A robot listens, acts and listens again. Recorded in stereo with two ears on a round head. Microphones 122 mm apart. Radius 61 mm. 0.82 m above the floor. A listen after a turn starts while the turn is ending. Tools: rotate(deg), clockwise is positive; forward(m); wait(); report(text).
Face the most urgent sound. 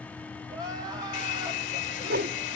rotate(30)
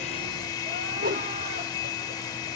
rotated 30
wait()
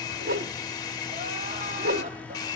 wait()
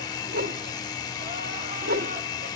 report("I heard crying, but can't make it out now. It was about straight ahead or 120° right.")